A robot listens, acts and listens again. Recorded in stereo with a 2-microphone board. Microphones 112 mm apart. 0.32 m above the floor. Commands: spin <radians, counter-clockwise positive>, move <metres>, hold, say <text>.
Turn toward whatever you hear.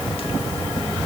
hold
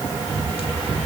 hold
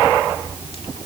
say I can't make out anything.